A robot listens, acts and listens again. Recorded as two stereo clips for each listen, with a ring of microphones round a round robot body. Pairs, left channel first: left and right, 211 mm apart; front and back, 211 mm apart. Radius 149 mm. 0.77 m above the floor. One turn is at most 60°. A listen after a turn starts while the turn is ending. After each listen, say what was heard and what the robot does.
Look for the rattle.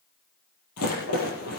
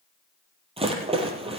The rattle: 115° left. Turn 60° left.
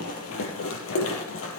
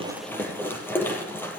The rattle is now 80° left. Turn 60° left.
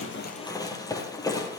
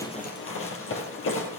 The rattle is now 15° left. Turn 15° left.
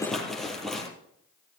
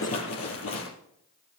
Found it: a rattle, straight ahead, over 4 m away.